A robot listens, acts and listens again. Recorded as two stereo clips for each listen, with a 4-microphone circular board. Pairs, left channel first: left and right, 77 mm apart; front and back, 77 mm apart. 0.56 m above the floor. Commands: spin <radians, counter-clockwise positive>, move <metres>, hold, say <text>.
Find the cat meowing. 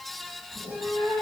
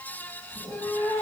spin -1.05
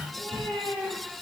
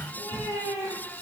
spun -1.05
say Found it: a cat meowing, straight ahead.